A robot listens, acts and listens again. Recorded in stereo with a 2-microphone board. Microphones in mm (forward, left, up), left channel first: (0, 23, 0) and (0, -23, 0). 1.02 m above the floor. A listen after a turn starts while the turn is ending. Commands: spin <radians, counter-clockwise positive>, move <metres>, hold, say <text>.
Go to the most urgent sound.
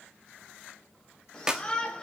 spin 0.26
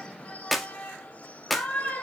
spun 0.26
spin 2.62
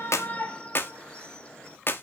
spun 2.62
spin 0.44
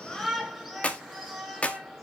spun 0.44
move 1.0
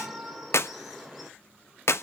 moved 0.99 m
move 1.0
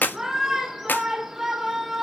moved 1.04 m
move 1.0
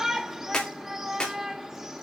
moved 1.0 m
spin -0.17
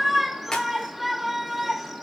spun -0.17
move 1.0
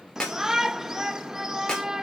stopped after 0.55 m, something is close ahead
spin -0.17
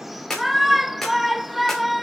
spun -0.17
say Arrived at the shout, straight ahead.